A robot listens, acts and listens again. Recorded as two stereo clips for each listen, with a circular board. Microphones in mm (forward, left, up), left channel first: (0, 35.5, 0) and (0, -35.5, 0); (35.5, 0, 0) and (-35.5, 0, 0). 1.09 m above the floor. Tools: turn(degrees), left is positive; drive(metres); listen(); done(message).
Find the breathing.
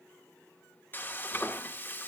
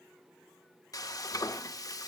listen()
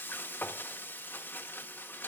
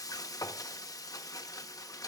listen()
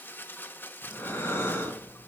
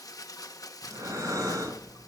turn(degrees=150)
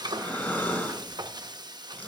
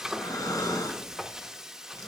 turn(degrees=25)
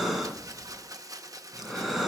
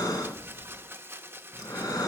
done("Found it: breathing, straight ahead.")